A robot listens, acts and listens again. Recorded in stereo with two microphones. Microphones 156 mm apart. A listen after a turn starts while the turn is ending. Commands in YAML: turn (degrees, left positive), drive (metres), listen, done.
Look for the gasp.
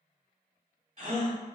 turn: -50
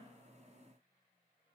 listen: true
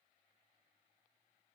done: "I heard a gasp, but can't make it out now. It was about straight ahead or 80° right."